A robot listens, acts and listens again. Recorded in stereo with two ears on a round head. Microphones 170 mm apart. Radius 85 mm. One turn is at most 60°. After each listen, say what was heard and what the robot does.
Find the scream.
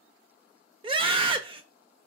The scream: about 30° right or 150° right. Turn 30° right.
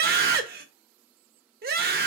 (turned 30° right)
So it is at 125° right. Turn 60° right.
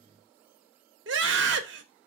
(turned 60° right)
The scream is now 75° right. Turn 60° right.
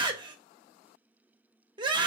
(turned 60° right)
The scream is now 25° right. Turn 25° right.
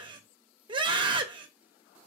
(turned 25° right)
The scream is now 25° right. Turn 25° right.
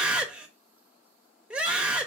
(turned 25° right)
Facing the scream, under 1 m away.